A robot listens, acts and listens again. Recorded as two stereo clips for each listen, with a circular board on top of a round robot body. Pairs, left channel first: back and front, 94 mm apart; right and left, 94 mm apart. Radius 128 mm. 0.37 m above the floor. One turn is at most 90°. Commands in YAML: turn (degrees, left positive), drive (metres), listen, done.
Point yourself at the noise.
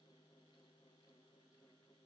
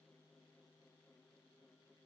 listen: true
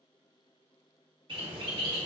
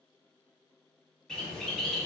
turn: -10
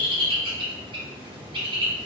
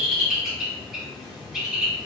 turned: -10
done: "Found it: a bird, straight ahead."